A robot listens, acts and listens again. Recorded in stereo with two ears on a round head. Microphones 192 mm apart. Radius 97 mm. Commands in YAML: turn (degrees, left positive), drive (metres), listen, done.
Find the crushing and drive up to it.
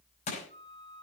turn: 35
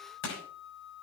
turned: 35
turn: 110
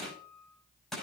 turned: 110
drive: 1.0
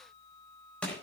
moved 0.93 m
drive: 1.0
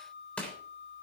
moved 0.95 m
drive: 1.0
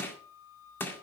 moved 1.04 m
turn: 10
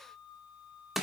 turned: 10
drive: 1.0
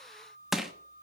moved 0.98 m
drive: 1.0
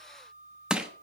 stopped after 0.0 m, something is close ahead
done: "I am next to the crushing."